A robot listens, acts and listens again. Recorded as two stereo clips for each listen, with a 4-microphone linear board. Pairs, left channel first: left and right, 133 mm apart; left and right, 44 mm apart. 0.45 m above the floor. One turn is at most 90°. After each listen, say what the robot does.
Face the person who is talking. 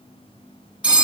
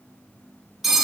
Keep listening.
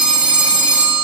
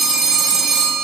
Keep listening.
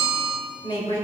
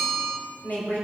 Turn 45° left.
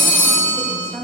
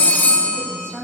Turn 15° left.
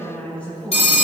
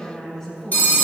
Turn 10° left.
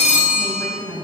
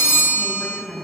Turn 10° left.
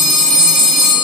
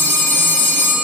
Keep listening.
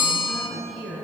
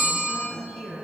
Found it: a woman speaking, straight ahead, 2 to 4 m away.